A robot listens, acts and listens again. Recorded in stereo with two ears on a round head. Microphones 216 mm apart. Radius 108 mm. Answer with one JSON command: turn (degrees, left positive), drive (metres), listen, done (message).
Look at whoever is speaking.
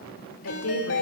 {"turn": 65}
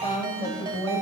{"turn": 15}
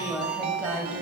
{"done": "Found it: a woman speaking, straight ahead."}